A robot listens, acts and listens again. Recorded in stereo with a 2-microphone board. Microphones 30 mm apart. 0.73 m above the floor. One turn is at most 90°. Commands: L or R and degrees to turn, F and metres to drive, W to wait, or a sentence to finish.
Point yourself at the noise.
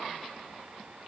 W
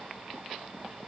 W
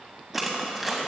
R30
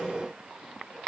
W
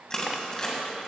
L20
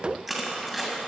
Facing the crushing, 2 to 4 m away.